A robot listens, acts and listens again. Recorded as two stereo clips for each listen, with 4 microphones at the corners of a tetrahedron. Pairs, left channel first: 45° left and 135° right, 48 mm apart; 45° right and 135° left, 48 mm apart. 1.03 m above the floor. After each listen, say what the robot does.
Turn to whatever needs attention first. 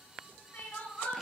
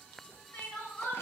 Found it: crying, straight ahead, 1 to 2 m away.